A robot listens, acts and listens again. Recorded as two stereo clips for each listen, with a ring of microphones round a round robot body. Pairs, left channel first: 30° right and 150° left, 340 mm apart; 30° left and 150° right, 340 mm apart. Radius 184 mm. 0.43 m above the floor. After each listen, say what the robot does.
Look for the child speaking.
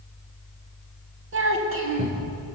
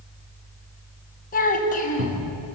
Turn 100° left.
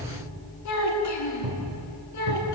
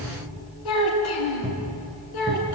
Turn 10° left.
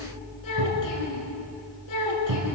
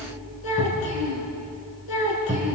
Found it: a child speaking, straight ahead, over 4 m away.